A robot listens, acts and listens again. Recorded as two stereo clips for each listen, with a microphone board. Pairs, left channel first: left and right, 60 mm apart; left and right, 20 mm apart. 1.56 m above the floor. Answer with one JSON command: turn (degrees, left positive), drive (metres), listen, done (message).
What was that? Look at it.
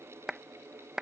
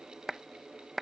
{"turn": -30}
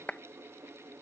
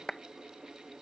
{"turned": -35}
{"turn": 25}
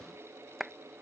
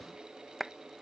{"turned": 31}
{"done": "Facing the clap."}